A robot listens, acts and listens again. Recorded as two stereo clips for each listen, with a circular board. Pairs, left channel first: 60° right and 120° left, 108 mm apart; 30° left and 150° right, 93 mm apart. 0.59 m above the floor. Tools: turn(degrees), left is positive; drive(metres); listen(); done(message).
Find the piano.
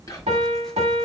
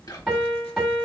turn(degrees=120)
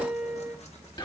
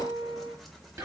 turn(degrees=35)
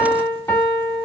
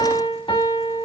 done("Facing the piano.")